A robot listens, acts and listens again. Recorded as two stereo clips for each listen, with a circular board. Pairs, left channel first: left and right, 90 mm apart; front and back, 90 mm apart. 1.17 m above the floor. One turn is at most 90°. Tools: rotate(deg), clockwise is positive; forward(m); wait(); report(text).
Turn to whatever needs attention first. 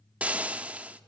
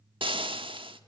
wait()
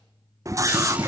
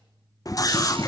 rotate(45)
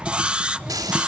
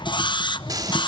rotate(15)
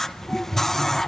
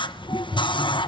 report("Facing the scream, 1 to 2 m away.")